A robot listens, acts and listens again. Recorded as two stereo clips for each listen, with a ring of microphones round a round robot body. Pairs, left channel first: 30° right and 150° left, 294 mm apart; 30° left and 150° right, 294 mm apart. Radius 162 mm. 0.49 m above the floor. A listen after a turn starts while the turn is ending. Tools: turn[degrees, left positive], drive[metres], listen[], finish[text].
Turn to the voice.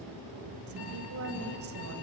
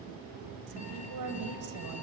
Thought: The woman speaking: 165° right.
Action: turn[-165]
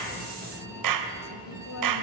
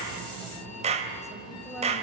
Action: listen[]
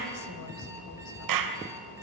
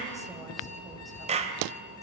Action: listen[]
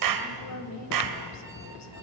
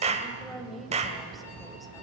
Thought: The woman speaking is now 60° right.
Action: turn[-60]
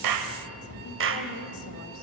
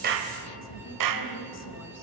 Action: listen[]
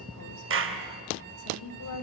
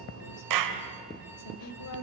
Action: finish[Found it: a woman speaking, straight ahead.]